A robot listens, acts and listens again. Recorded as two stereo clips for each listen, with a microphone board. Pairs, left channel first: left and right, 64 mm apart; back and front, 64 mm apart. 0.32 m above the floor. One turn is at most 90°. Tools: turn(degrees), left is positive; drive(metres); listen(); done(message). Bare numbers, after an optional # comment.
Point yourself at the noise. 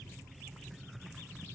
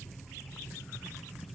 listen()
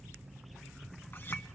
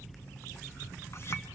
listen()
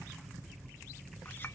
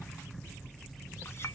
# The clink: 140° left.
turn(90)
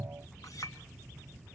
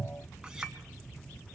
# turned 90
# The clink is now 80° left.
turn(80)
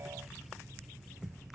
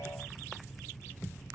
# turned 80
listen()
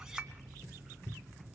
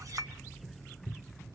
# The clink is now 10° right.
turn(-10)
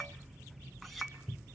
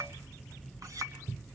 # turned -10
done("Facing the clink, 2 to 4 m away.")